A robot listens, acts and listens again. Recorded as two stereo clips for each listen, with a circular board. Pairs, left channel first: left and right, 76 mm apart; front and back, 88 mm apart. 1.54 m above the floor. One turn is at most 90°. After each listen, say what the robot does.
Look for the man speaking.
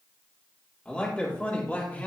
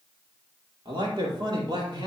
Turn 90° left.
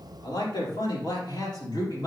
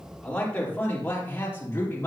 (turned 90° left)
Turn 60° left.
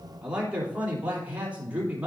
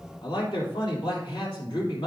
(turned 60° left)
Turn 20° right.
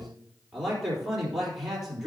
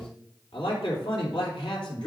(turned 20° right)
Facing the man speaking, 2 to 4 m away.